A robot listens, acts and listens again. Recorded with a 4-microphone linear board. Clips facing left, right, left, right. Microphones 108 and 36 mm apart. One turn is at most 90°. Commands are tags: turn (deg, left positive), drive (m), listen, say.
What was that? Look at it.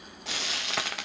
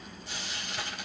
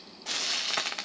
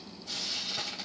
<turn deg="90"/>
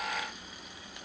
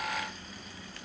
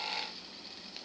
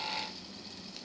<listen/>
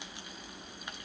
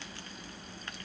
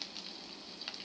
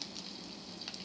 <listen/>
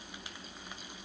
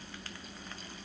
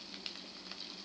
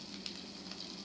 <say>I heard frying from this way, but can't make it out now.</say>